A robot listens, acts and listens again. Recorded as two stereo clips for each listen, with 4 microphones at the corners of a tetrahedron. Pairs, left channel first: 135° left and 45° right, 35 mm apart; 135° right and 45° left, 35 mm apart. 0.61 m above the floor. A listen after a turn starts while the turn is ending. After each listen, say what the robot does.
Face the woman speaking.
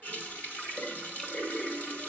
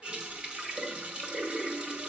Keep listening.
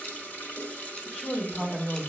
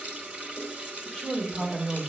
Turn 165° left.
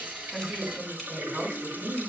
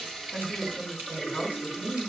Turn 30° left.
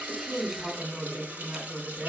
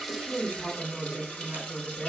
Found it: a woman speaking, straight ahead, over 4 m away.